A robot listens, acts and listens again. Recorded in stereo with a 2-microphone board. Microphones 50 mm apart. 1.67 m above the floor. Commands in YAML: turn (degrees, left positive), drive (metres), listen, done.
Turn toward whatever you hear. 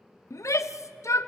turn: 90
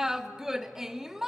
turn: -10
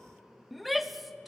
done: "Found it: a shout, straight ahead, under 1 m away."